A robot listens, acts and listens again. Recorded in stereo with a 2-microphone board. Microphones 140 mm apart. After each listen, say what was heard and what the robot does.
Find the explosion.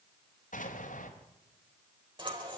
The explosion: about 70° left or 110° left. Turn 70° left.
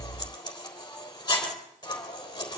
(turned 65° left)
Keep listening.
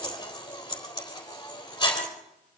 I heard an explosion, but can't make it out now. It was about 5° left or 45° left.